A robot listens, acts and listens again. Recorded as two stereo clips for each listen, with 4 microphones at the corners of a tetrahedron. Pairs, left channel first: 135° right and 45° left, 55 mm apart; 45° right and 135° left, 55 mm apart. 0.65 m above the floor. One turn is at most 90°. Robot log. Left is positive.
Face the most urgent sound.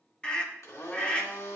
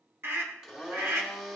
note: The scream: 160° left.
cmd yaw +90
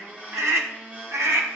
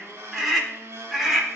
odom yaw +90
note: The scream is now 50° left.
cmd yaw +50
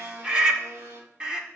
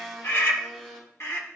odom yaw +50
note: The scream is now 20° right.
cmd yaw -20
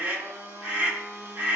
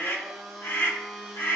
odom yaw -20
note: The scream is now 10° right.
cmd yaw -10
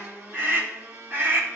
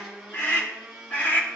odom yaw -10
end: Found it: a scream, straight ahead, 1 to 2 m away.